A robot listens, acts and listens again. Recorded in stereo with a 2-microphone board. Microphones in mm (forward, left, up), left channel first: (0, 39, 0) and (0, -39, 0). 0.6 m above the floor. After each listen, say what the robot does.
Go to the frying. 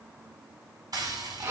Turn 55° right.
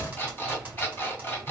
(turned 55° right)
Turn 20° right.
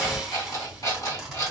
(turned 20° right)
Drive 1.0 m forward.
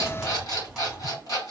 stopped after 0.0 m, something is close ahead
Something is in my way. I am facing the frying but have not reached it.